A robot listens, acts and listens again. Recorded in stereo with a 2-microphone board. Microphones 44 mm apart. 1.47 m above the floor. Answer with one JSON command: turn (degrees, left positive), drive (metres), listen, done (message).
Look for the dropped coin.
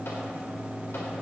{"listen": true}
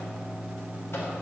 {"listen": true}
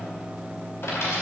{"turn": 70}
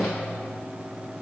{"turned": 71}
{"listen": true}
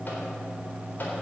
{"done": "I heard a dropped coin, but can't make it out now. It was about straight ahead or 35° left."}